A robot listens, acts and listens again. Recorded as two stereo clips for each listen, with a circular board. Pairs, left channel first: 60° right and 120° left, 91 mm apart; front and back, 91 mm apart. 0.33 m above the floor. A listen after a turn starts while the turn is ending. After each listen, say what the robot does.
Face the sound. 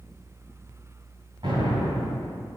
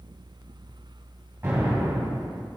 Turn 120° left.
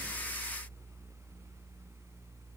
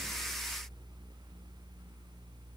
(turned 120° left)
Facing where the explosion came from. I can't hear it now.